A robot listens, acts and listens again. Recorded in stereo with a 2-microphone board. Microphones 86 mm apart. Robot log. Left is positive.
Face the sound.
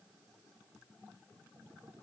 cmd idle
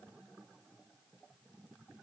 cmd idle
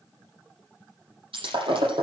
cmd yaw -90
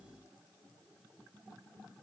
end: I heard breaking glass from this way, but can't make it out now.